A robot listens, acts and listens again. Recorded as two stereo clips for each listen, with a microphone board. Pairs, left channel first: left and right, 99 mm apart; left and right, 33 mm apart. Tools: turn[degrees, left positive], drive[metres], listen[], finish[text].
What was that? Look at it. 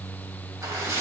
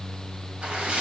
Thought: The splash: about 35° right or 145° right.
Action: turn[-35]
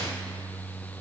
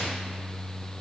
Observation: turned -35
Action: listen[]
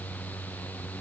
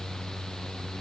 Action: finish[I heard a splash, but can't make it out now. It was about straight ahead or 110° right.]